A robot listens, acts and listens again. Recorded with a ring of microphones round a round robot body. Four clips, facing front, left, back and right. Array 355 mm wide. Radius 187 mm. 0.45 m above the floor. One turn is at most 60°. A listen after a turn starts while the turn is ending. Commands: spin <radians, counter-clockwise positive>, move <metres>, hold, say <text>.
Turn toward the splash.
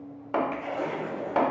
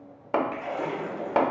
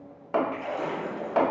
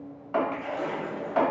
spin 1.05
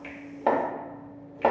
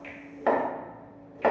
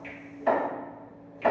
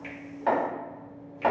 spin 1.05
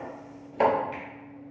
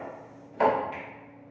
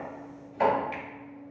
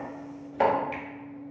spin 0.44
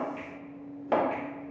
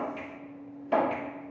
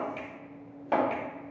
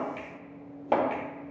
say Facing where the splash came from. I can't hear it now.